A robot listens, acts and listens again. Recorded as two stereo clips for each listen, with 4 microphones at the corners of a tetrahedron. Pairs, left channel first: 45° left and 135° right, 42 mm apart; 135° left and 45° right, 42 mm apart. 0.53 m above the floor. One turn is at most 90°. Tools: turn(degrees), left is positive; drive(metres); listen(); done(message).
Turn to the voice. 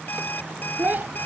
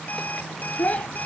turn(degrees=-90)
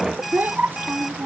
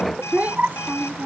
turn(degrees=-90)
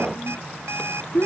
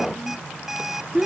turn(degrees=15)
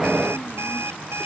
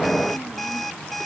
listen()
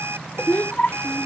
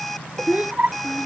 done("Found it: a child speaking, straight ahead.")